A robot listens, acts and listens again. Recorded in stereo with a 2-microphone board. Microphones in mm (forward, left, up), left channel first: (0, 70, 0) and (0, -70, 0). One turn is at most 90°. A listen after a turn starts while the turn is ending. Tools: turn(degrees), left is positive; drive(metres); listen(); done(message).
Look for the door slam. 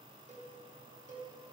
listen()
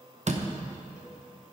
turn(degrees=-55)
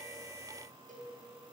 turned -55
listen()
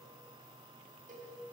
done("I heard a door slam, but can't make it out now. It was about straight ahead or 70° right.")